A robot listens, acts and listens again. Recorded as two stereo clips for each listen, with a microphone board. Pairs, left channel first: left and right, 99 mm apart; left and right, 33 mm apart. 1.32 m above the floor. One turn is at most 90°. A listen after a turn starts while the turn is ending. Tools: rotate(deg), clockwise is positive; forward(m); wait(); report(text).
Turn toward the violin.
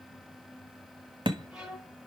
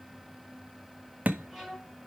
rotate(30)
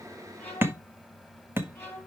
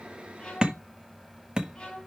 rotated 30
rotate(-20)
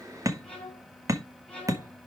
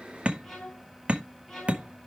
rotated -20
rotate(-10)
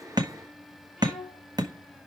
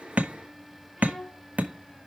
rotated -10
report("Facing the violin.")